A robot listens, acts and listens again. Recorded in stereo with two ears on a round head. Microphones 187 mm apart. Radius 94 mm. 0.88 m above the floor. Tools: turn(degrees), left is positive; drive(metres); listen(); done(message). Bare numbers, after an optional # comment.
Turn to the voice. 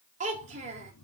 # The child speaking: about 35° right or 145° right.
turn(-35)
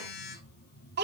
# So it is at 125° right.
turn(-125)
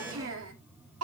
# The child speaking is now 75° right.
turn(-75)
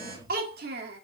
# The child speaking is now 50° right.
turn(-50)
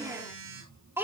# The child speaking is now 10° right.
turn(-10)
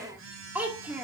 done("Found it: a child speaking, straight ahead.")